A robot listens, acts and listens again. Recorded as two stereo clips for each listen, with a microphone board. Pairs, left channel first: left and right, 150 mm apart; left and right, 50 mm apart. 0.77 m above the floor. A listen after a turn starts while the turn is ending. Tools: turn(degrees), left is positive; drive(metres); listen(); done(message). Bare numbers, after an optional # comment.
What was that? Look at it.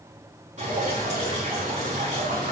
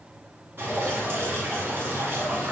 # The dripping: about 50° right or 130° right.
turn(-50)
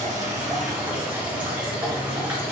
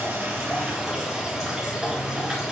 # So it is at 10° right.
turn(-10)
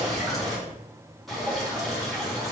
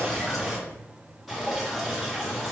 done("Found it: dripping, straight ahead, 2 to 4 m away.")